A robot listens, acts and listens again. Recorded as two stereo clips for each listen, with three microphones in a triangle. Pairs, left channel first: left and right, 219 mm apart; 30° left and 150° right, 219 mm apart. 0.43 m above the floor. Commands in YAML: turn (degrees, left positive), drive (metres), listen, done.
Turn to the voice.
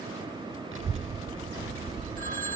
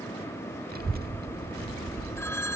turn: -105
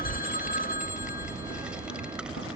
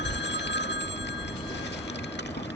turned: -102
done: "Facing the child speaking."